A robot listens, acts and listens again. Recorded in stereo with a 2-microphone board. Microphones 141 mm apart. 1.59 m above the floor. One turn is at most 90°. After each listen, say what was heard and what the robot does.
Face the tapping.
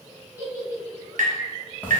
The tapping: about 75° right or 105° right. Turn 75° right.
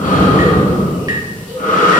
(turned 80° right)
Keep listening.
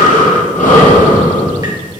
Keep listening.
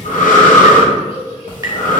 I heard tapping, but can't make it out now. It was about 5° left or 25° right.